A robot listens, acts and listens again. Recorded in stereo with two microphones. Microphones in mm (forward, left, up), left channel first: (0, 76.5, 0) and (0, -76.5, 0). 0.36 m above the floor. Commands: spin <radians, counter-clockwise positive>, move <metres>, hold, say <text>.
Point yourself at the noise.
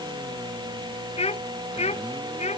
spin 0.79
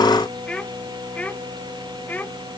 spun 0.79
spin 0.17
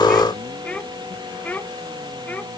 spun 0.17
spin 0.17
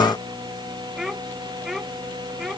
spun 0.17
say Found it: a child speaking, straight ahead.